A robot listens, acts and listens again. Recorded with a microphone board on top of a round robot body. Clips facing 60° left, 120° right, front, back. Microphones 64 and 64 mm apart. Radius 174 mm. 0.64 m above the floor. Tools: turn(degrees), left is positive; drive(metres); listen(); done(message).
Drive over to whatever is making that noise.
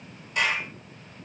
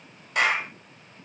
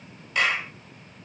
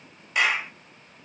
turn(degrees=-100)
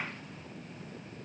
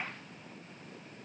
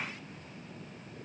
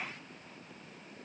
listen()
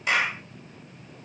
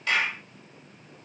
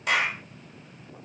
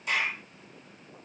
turn(degrees=-10)
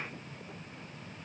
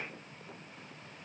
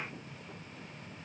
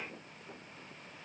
listen()
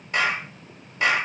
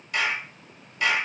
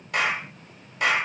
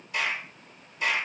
drive(metres=1.0)
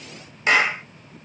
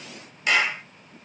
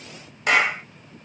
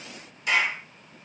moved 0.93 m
drive(metres=1.0)
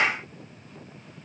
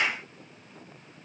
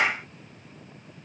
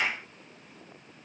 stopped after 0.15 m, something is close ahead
turn(degrees=10)
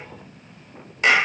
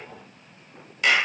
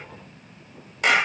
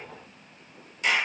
done("Arrived at the clap, straight ahead.")